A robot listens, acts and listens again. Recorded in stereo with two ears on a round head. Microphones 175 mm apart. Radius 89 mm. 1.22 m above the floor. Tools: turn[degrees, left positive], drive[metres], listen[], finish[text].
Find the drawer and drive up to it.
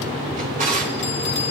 Thought: The drawer: about 40° right or 140° right.
Action: turn[-40]
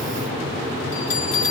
Action: listen[]
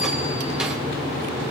Action: listen[]
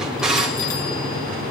Action: drive[1.0]
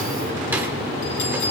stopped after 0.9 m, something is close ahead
Thought: The drawer is now 10° right.
Action: turn[-10]
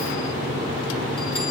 Action: listen[]
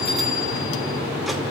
Action: listen[]
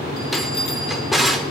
Action: finish[I am next to the drawer.]